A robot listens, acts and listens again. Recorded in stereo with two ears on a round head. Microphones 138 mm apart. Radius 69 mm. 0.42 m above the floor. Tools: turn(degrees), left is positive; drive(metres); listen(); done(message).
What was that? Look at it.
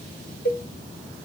turn(degrees=65)
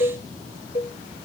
turn(degrees=50)
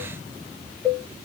done("Found it: a cowbell, straight ahead.")